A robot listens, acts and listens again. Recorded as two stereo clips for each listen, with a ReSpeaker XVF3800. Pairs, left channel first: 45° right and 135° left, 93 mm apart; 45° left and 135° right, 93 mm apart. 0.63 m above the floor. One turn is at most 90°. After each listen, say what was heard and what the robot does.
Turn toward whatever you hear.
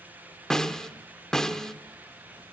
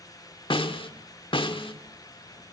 The snare drum: 40° left. Turn 40° left.
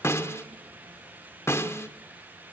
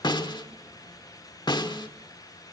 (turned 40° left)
The snare drum is now 15° left. Turn 15° left.
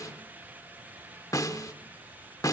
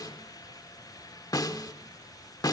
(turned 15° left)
Facing the snare drum.